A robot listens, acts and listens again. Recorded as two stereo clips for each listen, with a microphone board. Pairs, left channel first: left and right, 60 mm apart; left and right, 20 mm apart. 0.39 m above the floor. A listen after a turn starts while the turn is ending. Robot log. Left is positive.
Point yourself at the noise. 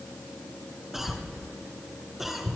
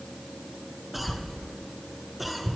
cmd yaw -30
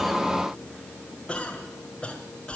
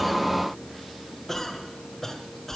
note: So it is at 20° left.
cmd yaw +20
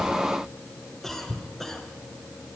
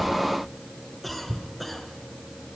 end: Found it: a cough, straight ahead.